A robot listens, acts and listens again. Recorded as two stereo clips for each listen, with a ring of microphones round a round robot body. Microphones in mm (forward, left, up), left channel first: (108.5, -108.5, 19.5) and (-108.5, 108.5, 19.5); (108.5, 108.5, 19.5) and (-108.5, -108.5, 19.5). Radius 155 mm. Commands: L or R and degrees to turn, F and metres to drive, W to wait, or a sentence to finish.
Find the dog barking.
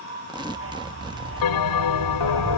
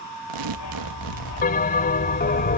L85
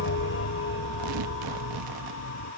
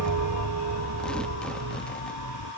Found it: a dog barking, straight ahead.